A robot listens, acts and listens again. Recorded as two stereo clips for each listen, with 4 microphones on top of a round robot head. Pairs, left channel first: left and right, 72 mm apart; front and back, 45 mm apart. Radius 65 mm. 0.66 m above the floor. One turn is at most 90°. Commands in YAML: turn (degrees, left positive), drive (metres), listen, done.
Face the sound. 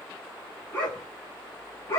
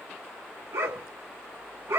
turn: 90
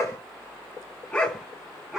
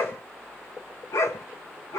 done: "Facing the dog barking."